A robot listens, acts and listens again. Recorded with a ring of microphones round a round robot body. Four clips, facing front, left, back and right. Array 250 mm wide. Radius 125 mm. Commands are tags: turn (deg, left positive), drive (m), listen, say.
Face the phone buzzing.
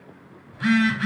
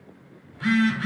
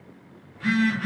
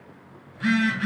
<say>Found it: a phone buzzing, straight ahead, 1 to 2 m away.</say>